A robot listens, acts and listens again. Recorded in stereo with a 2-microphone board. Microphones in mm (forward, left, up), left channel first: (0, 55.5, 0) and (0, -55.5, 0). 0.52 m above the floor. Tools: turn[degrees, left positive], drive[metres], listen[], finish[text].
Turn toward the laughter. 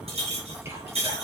Action: listen[]
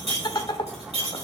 Thought: The laughter: about 40° left or 140° left.
Action: turn[40]
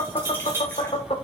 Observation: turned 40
Thought: So it is at 90° left.
Action: turn[90]
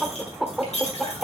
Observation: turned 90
Action: finish[Found it: laughter, straight ahead, 1 to 2 m away.]